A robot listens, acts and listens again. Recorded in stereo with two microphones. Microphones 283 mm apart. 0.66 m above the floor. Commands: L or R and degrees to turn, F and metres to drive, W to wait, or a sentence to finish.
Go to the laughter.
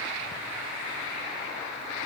W
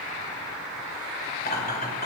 L35
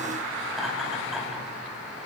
F1.0
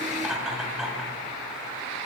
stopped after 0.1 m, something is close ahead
Blocked. The laughter is further on, straight ahead.